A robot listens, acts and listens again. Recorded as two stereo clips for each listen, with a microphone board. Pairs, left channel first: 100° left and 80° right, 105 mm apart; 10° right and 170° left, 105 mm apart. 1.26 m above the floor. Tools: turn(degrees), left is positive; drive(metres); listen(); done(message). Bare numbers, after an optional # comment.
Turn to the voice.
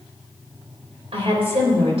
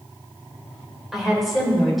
# The woman speaking: 100° right.
turn(-100)
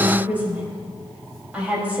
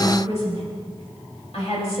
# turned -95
done("Facing the woman speaking, over 4 m away.")